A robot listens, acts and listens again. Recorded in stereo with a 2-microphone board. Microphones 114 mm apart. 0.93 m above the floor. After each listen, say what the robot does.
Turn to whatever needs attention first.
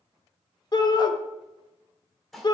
Turn 35° left.
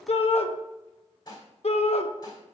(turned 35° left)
Turn 105° left.
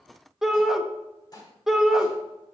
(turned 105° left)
Found it: a shout, straight ahead, 1 to 2 m away.